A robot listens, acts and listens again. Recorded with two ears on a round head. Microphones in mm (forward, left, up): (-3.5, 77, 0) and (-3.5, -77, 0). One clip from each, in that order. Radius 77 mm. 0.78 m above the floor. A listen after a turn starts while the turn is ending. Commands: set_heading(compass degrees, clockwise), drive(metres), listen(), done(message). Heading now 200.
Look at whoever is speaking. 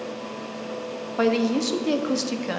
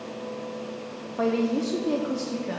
set_heading(140)
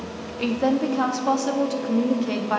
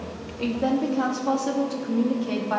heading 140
set_heading(125)
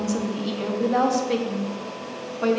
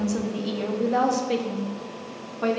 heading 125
done("Found it: a woman speaking, straight ahead.")